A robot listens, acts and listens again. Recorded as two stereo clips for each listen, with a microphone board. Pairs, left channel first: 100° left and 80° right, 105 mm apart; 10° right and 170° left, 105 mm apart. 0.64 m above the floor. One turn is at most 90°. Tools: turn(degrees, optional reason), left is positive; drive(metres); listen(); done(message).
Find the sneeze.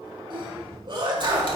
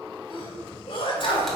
turn(degrees=-45, reason="The sneeze: 45° right.")
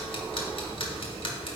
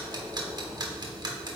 done("Facing where the sneeze came from. I can't hear it now.")